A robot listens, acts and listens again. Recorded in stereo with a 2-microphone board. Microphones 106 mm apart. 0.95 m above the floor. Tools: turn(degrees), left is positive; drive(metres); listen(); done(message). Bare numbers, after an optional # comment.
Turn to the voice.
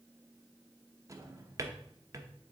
listen()
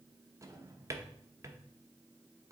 listen()
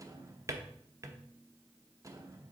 done("I can't make out anyone speaking, only a drawer.")